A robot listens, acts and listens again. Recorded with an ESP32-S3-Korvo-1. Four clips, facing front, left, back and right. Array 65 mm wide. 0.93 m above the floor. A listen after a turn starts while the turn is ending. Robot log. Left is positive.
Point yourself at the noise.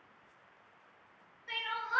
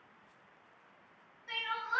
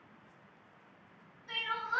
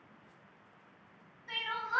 note: The crying: 25° left.
cmd yaw +25
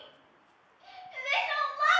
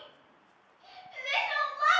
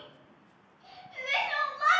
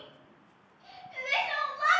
end: Found it: crying, straight ahead.